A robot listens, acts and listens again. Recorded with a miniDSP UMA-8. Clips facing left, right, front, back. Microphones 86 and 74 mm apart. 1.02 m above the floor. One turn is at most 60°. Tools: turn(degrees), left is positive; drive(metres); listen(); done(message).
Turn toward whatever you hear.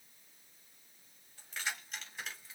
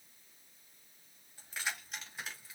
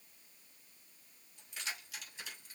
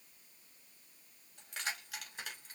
turn(degrees=-60)
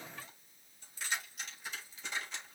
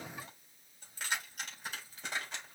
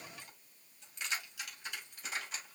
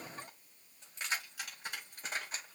turn(degrees=-60)
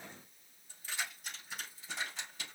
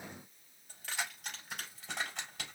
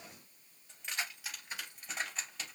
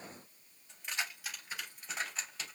turn(degrees=-60)
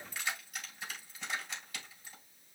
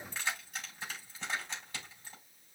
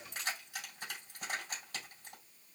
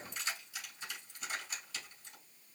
turn(degrees=-30)
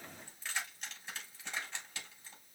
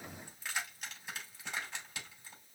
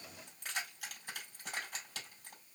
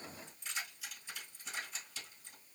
turn(degrees=-10)
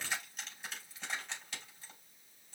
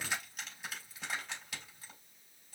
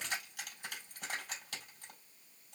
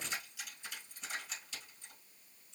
done("Found it: keys jangling, straight ahead, 2 to 4 m away.")